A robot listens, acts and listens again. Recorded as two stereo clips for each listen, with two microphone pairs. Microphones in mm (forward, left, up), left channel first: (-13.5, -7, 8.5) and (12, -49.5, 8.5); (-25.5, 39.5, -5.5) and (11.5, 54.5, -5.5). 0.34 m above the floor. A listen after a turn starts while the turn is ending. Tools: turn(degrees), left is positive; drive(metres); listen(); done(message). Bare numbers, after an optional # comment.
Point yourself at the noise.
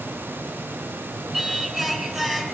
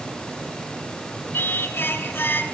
# The singing: 140° right.
turn(-140)
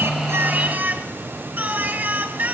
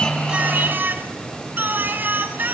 done("Found it: singing, straight ahead, 2 to 4 m away.")